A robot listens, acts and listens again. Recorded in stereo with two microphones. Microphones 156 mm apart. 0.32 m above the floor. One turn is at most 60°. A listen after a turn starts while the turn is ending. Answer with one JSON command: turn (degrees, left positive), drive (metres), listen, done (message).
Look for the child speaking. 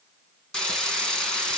{"listen": true}
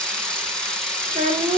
{"turn": -60}
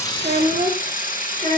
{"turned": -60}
{"turn": -40}
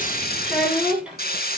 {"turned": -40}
{"done": "Found it: a child speaking, straight ahead, over 4 m away."}